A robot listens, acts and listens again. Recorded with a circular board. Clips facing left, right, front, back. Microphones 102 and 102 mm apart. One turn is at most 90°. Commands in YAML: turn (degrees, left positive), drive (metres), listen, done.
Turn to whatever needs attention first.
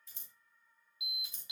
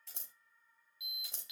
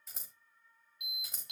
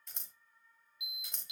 turn: 25
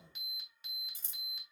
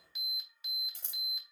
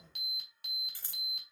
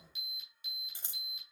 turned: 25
done: "Found it: an alarm, straight ahead, 2 to 4 m away."